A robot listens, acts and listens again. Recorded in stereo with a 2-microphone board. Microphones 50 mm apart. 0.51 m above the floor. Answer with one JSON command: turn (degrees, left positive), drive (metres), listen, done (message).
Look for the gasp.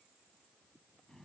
{"listen": true}
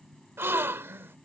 {"turn": -55}
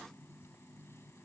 {"listen": true}
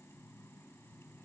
{"done": "I heard a gasp, but can't make it out now. It was about straight ahead or 70° right."}